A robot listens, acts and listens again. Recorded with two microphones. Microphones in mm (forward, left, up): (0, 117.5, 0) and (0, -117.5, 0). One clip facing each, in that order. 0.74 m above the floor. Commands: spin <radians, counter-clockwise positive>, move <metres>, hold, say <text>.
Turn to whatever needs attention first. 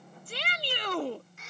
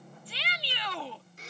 spin 0.87
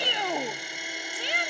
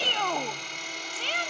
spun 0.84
spin 0.26
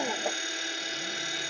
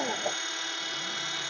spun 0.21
hold
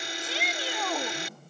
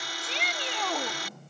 say Facing the shout.